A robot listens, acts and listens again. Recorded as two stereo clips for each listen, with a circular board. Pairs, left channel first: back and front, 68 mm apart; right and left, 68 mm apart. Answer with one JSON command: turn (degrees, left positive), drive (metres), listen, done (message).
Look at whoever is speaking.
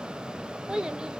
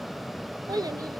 {"turn": 80}
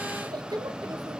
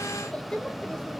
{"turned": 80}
{"turn": -10}
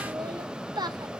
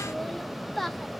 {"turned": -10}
{"done": "Found it: a child speaking, straight ahead, 1 to 2 m away."}